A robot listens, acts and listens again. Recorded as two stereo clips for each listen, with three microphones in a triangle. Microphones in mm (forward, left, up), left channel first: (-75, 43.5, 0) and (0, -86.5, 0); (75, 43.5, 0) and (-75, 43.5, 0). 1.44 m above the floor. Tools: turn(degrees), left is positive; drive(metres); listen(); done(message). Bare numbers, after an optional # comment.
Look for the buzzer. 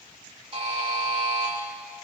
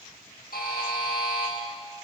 # The buzzer: 10° right.
turn(-10)
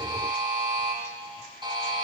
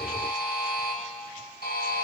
done("Facing the buzzer.")